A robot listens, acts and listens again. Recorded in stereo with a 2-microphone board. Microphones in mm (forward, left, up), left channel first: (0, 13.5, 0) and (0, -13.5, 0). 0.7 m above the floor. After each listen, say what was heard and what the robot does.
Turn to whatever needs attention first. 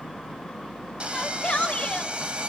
The shout: about 45° left or 135° left. Turn 45° left.
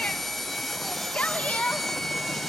So it is at 80° left. Turn 80° left.
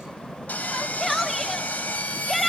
Found it: a shout, straight ahead.